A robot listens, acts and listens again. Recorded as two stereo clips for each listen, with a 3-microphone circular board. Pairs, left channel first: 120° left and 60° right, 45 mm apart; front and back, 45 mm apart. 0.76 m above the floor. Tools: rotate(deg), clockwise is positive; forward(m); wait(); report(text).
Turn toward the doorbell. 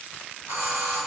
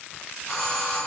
rotate(75)
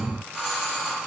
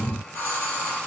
rotate(-10)
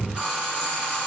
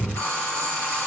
report("Facing the doorbell, over 4 m away.")